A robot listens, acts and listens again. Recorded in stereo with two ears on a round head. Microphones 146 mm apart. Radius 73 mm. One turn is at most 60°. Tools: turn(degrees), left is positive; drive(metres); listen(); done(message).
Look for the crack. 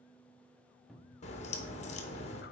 turn(degrees=40)
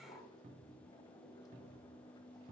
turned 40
listen()
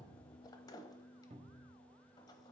done("I heard a crack, but can't make it out now. It was about straight ahead or 100° left.")